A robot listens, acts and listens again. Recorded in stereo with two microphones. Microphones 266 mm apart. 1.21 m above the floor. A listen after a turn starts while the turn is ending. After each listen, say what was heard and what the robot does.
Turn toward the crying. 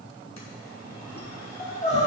The crying: about 25° left or 155° left. Turn 25° left.
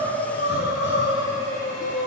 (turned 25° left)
So it is at 130° left. Turn 130° left.
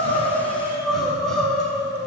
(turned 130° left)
Facing the crying.